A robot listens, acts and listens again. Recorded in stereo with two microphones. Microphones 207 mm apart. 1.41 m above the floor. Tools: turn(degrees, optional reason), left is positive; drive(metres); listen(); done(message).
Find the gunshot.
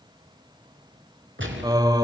turn(degrees=-70, reason="The gunshot: about 70° right or 110° right.")
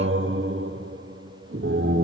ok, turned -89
listen()
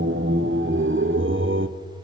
done("I heard a gunshot, but can't make it out now. It was about 20° left or 20° right.")